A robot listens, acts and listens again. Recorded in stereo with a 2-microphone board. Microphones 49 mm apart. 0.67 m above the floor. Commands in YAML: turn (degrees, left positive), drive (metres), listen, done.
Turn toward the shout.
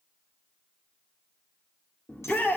turn: 30
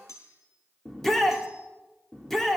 done: "Found it: a shout, straight ahead, 1 to 2 m away."